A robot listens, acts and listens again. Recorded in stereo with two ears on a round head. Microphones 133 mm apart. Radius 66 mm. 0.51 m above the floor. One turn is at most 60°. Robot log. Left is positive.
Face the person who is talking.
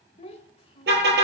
note: The child speaking: about 40° left or 140° left.
cmd yaw +40
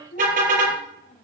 note: So it is at 125° left.
cmd yaw +60
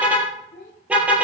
note: The child speaking is now 70° left.
cmd yaw +60
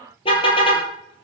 note: Nothing new. It was at 10° left.
cmd yaw +10
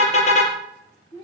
note: The child speaking is now 25° left.
cmd yaw +25
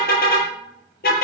cmd idle
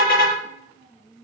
note: The child speaking is now 10° left.
cmd yaw +10
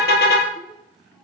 cmd idle
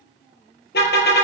end: Found it: a child speaking, straight ahead.